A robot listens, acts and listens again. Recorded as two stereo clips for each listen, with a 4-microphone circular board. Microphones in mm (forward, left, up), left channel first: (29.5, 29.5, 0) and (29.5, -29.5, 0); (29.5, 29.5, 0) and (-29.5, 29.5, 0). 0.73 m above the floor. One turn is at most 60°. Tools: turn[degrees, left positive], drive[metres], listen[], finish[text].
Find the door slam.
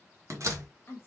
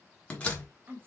Thought: The door slam: 65° right.
Action: turn[-60]
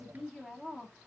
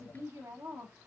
Action: finish[I heard a door slam from this way, but can't make it out now.]